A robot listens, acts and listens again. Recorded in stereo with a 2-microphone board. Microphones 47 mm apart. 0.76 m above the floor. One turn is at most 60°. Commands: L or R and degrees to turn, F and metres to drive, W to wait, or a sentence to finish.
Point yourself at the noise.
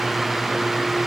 W
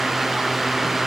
W
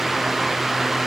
I can't make out anything.